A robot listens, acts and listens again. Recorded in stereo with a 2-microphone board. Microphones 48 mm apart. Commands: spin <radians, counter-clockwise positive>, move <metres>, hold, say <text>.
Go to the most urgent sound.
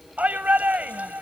spin -0.61
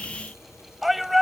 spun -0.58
move 1.0
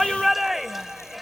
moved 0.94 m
move 1.0
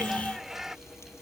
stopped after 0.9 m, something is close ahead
spin -0.26
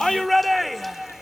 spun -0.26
say Arrived at the shout, straight ahead.